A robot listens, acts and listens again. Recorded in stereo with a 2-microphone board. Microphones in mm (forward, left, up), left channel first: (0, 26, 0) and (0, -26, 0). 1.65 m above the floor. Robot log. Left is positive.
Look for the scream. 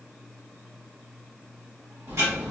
cmd idle
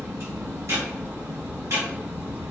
cmd idle
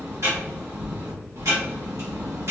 end: I can't make out a scream, only ticking.